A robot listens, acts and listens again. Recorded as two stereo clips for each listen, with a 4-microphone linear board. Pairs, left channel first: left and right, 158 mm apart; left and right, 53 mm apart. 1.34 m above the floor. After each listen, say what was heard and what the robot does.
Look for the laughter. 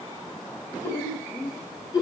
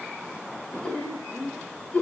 The laughter: about 25° left or 155° left. Turn 25° left.
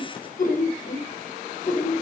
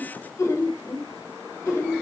So it is at 95° left. Turn 95° left.
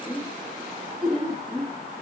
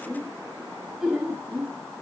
The laughter is now 10° right. Turn 10° right.
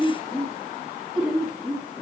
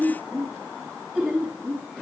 Facing the laughter.